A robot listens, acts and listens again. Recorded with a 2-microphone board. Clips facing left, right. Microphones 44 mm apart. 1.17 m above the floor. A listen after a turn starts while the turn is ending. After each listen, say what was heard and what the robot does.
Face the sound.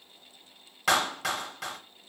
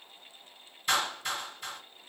Turn 90° left.
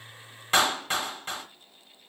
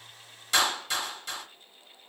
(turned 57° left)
So it is at 35° left. Turn 35° left.
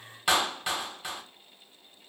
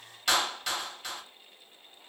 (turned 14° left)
The clap is now 20° left. Turn 20° left.
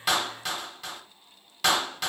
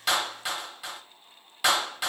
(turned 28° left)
The clap is now 10° right. Turn 10° right.
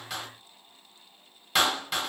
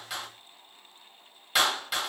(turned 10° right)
Found it: a clap, straight ahead.